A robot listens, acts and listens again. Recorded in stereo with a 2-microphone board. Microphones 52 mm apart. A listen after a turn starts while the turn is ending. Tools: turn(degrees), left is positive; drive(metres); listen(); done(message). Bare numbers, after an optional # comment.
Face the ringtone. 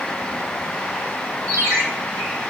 # The ringtone: about 70° right or 110° right.
turn(-70)
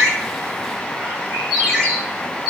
# So it is at 10° right.
turn(-10)
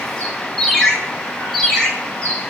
done("Facing the ringtone.")